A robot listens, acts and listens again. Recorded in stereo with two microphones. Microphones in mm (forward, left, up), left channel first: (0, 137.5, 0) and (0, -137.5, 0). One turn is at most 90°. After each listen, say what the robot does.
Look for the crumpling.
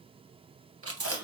Keep listening.
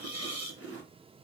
Keep listening.
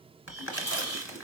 Turn 45° left.
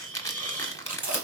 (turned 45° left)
Turn 15° left.
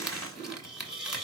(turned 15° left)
Found it: crumpling, straight ahead, 1 to 2 m away.